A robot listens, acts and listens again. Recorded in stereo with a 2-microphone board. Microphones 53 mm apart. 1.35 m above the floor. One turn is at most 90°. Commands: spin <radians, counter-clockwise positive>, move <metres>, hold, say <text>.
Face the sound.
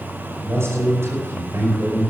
spin -0.96
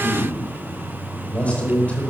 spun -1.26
spin 0.44
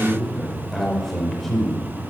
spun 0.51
say Found it: a man speaking, straight ahead, over 4 m away.